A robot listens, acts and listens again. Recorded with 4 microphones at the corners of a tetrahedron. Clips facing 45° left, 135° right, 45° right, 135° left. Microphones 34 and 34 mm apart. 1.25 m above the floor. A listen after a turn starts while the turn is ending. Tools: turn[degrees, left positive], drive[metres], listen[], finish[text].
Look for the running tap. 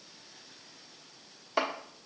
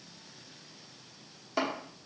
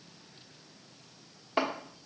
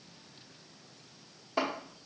Action: listen[]
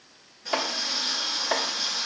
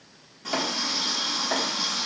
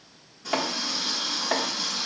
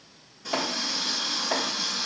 Thought: The running tap: 135° right.
Action: turn[-135]
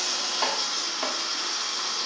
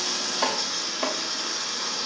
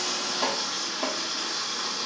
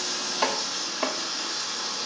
Action: finish[Facing the running tap.]